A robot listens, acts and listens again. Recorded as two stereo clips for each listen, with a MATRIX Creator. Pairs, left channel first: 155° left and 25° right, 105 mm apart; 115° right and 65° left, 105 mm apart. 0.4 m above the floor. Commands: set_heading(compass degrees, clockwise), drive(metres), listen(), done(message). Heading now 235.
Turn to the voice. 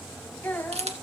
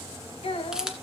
set_heading(5)
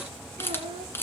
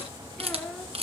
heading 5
set_heading(40)
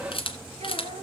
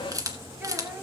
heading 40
listen()
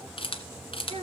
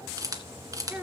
done("Facing the child speaking, over 4 m away.")